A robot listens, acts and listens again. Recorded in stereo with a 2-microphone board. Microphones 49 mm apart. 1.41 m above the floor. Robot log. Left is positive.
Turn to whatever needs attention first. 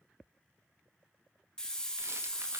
cmd idle
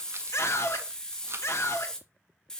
note: The scream: about 65° left or 115° left.
cmd yaw +65
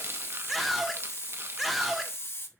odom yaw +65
end: Facing the scream.